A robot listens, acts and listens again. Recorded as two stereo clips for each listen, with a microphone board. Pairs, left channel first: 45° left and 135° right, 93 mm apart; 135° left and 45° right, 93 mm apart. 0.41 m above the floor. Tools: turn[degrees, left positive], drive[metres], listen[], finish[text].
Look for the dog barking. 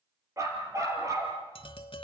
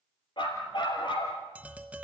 Thought: The dog barking: 170° left.
Action: turn[170]
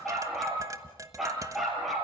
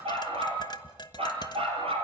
Thought: The dog barking is now 50° right.
Action: turn[-50]
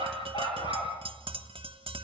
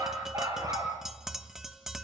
Thought: The dog barking is now 10° left.
Action: turn[10]
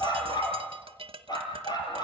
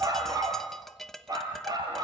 Action: finish[Facing the dog barking, over 4 m away.]